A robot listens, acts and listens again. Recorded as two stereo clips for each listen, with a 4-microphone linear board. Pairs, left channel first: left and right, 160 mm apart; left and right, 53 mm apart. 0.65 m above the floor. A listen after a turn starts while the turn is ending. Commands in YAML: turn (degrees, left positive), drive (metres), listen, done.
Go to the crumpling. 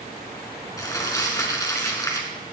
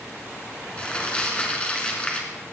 turn: 20
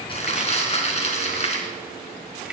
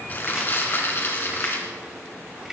turn: 140
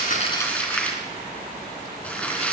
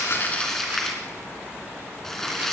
turn: 10
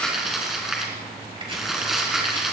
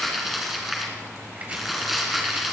drive: 1.0
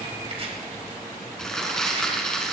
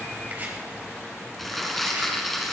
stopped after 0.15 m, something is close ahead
done: "Blocked. The crumpling is further on, straight ahead."